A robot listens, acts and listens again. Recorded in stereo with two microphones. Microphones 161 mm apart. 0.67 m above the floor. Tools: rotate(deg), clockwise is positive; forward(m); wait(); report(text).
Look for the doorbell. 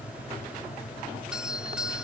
rotate(30)
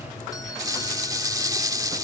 wait()
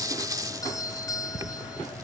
rotate(-25)
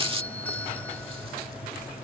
rotate(-10)
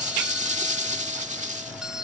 report("Facing the doorbell.")